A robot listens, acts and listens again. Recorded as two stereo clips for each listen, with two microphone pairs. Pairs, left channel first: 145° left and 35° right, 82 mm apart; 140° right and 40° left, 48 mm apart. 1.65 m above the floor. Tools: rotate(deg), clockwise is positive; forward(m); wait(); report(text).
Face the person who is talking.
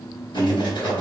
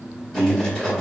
rotate(165)
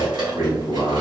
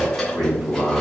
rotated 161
report("Facing the man speaking.")